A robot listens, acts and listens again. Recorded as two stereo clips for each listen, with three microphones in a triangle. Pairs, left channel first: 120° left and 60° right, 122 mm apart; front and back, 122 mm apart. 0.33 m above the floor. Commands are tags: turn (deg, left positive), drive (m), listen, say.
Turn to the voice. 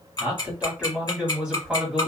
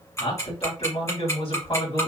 <turn deg="25"/>
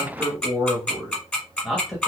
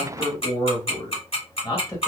<turn deg="30"/>
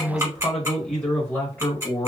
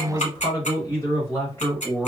<turn deg="60"/>
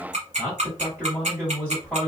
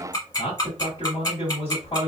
<say>Facing the man speaking, 1 to 2 m away.</say>